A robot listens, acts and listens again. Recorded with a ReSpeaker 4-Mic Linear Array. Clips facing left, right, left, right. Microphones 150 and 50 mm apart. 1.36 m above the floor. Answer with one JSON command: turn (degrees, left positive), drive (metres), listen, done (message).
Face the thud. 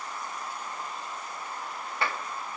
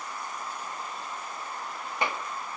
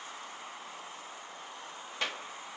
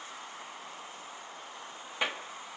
{"listen": true}
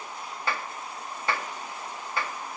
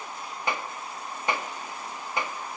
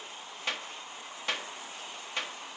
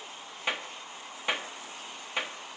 {"listen": true}
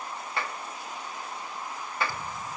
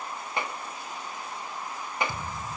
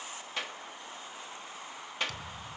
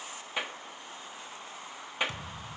{"turn": -25}
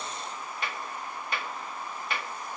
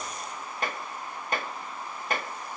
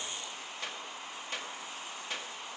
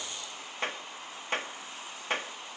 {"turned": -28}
{"listen": true}
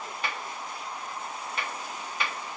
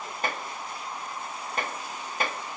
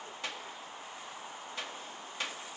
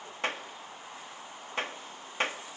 {"done": "I heard a thud, but can't make it out now. It was about 5° left or 125° right."}